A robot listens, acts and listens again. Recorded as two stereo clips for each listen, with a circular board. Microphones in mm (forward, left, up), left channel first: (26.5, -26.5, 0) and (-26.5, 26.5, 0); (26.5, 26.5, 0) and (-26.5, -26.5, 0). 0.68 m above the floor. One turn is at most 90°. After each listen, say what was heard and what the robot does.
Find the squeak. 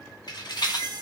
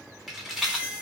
The squeak: 150° left. Turn 90° left.
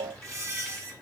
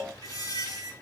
The squeak is now 85° left. Turn 85° left.
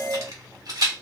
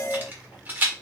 Keep listening.
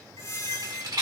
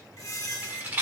Facing the squeak.